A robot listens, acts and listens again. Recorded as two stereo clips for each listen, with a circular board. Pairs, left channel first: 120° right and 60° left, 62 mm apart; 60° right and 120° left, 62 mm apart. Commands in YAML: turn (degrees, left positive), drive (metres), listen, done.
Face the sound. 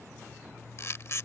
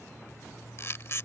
turn: -95
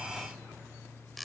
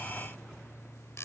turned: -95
turn: -30
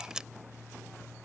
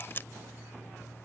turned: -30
turn: -15
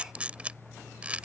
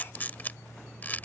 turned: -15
done: "Facing the camera shutter."